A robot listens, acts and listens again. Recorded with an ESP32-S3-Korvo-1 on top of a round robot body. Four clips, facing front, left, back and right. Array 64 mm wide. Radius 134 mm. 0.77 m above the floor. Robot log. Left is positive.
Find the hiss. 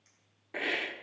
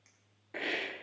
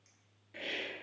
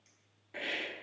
note: The hiss: 20° left.
cmd yaw +20
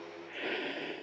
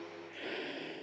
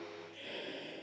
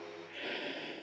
end: Facing the hiss, 1 to 2 m away.